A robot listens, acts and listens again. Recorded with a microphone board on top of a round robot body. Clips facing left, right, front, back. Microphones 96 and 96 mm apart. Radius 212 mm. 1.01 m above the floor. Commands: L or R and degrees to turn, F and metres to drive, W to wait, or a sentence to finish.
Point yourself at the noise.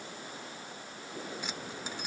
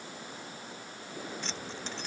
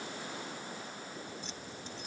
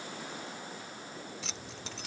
L170
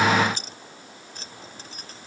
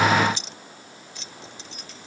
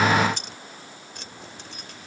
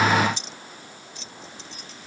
L40
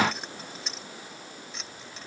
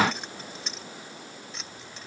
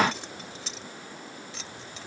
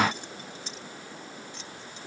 Found it: keys jangling, straight ahead.